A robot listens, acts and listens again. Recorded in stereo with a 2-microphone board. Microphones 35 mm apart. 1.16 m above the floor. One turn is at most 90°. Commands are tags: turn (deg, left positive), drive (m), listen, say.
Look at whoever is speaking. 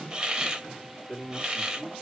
<turn deg="25"/>
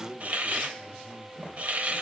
<turn deg="-10"/>
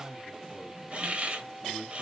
<say>Found it: a man speaking, straight ahead, 2 to 4 m away.</say>